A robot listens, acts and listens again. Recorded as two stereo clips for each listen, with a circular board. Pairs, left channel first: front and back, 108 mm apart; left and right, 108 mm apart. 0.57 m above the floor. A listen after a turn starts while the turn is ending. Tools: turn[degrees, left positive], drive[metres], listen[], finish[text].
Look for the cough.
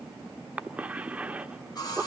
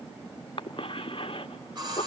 Thought: The cough: 105° left.
Action: turn[105]
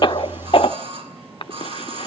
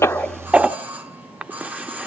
Thought: The cough is now 10° right.
Action: turn[-10]
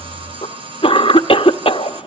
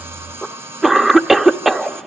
Action: finish[Found it: a cough, straight ahead.]